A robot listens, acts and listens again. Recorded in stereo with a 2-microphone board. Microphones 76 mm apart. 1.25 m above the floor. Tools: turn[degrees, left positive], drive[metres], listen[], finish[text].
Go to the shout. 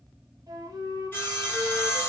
Action: listen[]
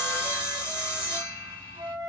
Action: listen[]
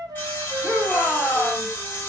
Action: turn[-30]
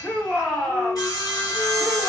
Thought: So it is at 25° left.
Action: turn[25]
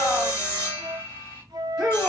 Action: drive[1.0]
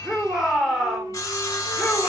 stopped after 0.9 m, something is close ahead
Action: finish[Arrived at the shout, straight ahead.]